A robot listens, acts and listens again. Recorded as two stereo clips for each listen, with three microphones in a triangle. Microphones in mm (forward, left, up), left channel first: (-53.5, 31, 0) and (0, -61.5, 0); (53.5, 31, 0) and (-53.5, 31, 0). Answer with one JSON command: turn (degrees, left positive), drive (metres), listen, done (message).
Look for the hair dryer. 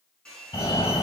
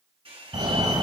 {"turn": -160}
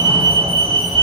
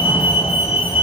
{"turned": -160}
{"listen": true}
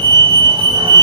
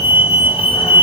{"listen": true}
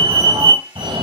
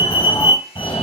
{"done": "Found it: a hair dryer, straight ahead."}